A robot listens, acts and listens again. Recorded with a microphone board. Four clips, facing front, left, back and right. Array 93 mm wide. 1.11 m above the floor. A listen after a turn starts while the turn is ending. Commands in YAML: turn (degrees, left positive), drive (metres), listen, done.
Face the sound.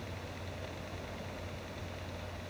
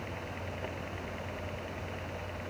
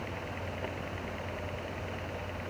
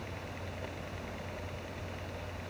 listen: true
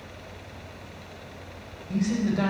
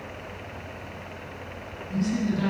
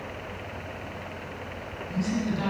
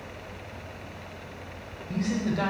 turn: -45
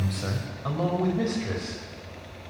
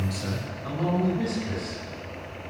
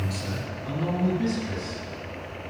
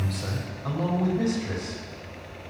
turn: -10
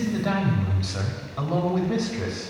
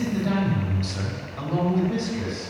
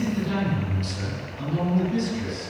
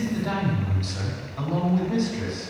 done: "Facing the man speaking, over 4 m away."